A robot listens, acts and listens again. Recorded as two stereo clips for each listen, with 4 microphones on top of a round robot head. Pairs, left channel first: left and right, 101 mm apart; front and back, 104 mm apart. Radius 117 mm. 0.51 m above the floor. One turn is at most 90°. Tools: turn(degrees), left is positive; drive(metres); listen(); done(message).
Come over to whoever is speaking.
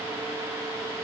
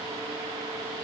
listen()
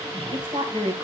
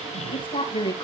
turn(degrees=-45)
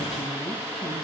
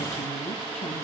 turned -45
listen()
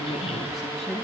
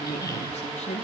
drive(metres=1.0)
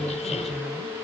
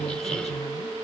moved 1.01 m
listen()
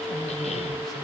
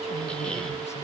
listen()
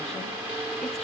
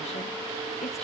done("I heard a woman speaking from this way, but can't make it out now. I did not reach it.")